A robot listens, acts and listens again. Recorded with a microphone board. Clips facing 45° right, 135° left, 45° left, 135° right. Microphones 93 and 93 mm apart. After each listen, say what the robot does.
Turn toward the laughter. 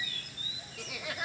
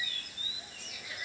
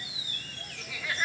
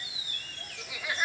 Turn 60° right.
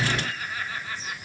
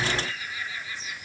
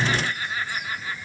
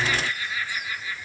Facing the laughter.